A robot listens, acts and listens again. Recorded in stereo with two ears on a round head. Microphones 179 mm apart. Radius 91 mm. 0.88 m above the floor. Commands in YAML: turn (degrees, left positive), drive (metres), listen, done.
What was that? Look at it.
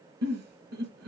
turn: -55
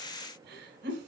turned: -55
turn: -60
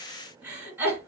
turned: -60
turn: -10
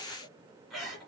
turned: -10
done: "Facing the giggle, 1 to 2 m away."